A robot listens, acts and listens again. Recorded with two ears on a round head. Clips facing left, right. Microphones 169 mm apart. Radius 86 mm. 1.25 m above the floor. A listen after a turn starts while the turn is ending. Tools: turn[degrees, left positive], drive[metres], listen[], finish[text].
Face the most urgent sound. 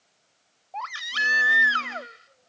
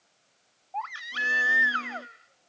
Thought: The baby crying: about 55° left or 125° left.
Action: turn[55]
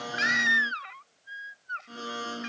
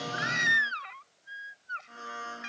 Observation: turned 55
Action: finish[Found it: a baby crying, straight ahead.]